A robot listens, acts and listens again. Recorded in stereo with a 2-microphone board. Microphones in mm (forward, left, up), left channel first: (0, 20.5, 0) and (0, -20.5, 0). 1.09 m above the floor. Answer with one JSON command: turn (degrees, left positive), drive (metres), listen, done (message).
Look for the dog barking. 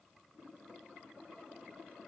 {"listen": true}
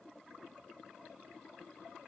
{"listen": true}
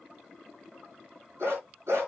{"turn": -90}
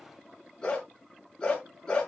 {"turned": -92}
{"turn": 15}
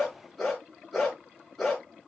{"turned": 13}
{"done": "Found it: a dog barking, straight ahead, over 4 m away."}